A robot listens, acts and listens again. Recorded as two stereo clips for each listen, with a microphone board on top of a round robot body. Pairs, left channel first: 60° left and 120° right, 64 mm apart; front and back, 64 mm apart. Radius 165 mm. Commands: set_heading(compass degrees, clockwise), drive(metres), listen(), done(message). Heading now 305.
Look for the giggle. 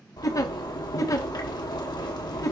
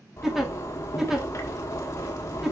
set_heading(210)
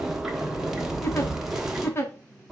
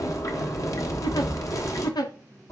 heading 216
set_heading(206)
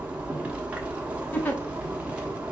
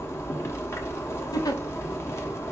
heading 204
done("Facing the giggle, 1 to 2 m away.")